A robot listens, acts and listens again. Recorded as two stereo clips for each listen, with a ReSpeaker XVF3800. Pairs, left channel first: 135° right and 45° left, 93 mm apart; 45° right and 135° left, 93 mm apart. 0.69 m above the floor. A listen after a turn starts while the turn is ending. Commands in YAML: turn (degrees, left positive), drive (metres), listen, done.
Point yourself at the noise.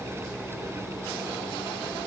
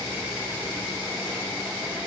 listen: true
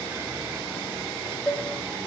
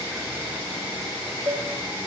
turn: 135
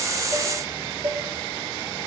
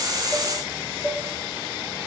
turn: 15
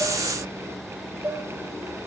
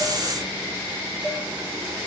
done: "Found it: dishes clattering, straight ahead, 1 to 2 m away."